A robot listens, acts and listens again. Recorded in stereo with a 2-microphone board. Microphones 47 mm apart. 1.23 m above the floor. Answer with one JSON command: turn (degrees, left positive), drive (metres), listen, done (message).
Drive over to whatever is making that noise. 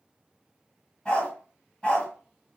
{"turn": 25}
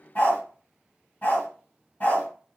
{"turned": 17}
{"turn": 140}
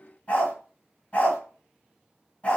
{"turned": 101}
{"turn": 35}
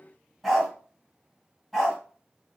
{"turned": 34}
{"drive": 1.0}
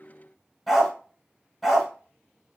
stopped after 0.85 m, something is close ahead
{"turn": 10}
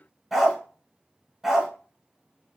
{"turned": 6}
{"done": "Arrived at the dog barking, straight ahead."}